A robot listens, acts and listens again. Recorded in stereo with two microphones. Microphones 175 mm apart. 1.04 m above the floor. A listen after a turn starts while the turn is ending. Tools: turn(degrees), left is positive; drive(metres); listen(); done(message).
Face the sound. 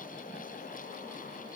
listen()
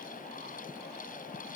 listen()
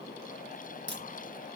turn(degrees=-90)
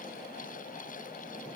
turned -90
done("Facing where the crack came from. I can't hear it now.")